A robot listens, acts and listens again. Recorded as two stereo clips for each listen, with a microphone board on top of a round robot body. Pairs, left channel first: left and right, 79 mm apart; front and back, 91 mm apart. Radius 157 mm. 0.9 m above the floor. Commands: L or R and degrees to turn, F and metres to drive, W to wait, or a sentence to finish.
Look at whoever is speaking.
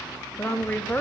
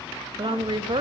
L160
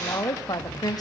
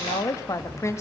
L60
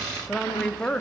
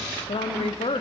L10
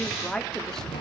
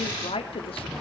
Found it: a woman speaking, straight ahead.